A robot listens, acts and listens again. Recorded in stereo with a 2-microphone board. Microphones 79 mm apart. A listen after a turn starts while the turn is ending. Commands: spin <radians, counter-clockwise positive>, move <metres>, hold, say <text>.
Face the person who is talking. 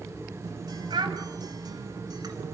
spin -1.57
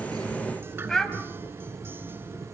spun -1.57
spin 0.17
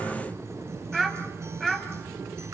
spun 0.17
say Facing the child speaking.